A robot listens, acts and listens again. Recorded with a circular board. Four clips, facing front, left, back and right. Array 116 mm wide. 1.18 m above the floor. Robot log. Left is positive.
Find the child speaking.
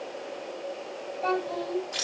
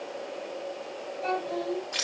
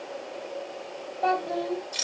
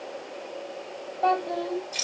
note: The child speaking: 135° right.
cmd yaw -135
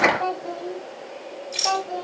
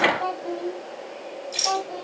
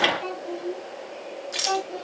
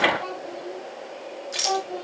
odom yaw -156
end: Facing the child speaking, 2 to 4 m away.